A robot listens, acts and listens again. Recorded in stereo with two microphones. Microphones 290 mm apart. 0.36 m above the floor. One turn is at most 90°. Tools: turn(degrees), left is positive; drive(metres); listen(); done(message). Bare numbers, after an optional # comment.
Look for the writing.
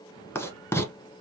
turn(30)
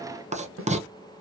# So it is at 25° right.
turn(-25)
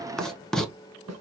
done("Facing the writing.")